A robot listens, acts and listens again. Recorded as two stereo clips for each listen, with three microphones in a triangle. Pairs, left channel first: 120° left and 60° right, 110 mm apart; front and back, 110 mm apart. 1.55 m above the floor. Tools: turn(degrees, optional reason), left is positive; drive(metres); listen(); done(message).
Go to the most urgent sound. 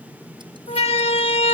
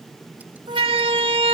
turn(degrees=145, reason="The siren: 145° left.")
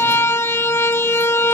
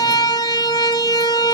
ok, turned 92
turn(degrees=50, reason="The siren is now 50° left.")
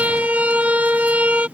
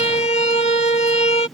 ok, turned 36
turn(degrees=15, reason="The siren is now 15° left.")
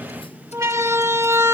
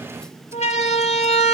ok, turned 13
drive(metres=1.0)
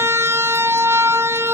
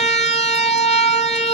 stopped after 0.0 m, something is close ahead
done("Something is in my way. I am facing the siren but have not reached it.")